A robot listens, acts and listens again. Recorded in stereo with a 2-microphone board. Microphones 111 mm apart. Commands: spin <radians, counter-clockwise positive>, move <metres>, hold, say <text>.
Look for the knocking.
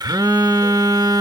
hold
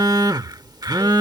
hold
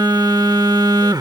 say I can't make out knocking to turn to.